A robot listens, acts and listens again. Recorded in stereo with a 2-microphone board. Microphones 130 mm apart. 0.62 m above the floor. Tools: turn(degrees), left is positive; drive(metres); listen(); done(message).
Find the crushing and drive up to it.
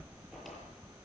listen()
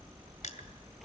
turn(degrees=90)
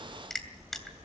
drive(metres=1.0)
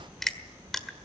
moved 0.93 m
drive(metres=1.0)
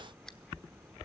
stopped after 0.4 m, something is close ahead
listen()
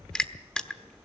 done("I am next to the crushing.")